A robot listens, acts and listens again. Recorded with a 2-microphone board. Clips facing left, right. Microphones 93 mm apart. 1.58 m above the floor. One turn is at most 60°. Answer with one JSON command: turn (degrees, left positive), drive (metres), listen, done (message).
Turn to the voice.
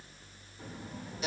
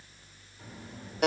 {"turn": 25}
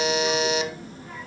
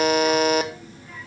{"turn": 40}
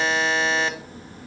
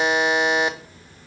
{"turn": 60}
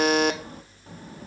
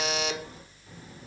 {"turn": 60}
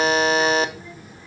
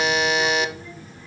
{"turn": 10}
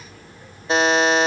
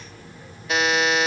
{"done": "Facing the child speaking."}